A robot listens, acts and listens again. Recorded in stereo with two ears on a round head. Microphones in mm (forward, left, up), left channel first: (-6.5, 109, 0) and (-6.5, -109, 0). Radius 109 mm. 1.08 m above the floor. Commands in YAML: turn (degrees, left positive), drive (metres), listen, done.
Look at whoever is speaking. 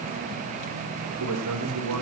turn: -90
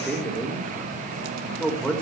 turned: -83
done: "Found it: a man speaking, straight ahead."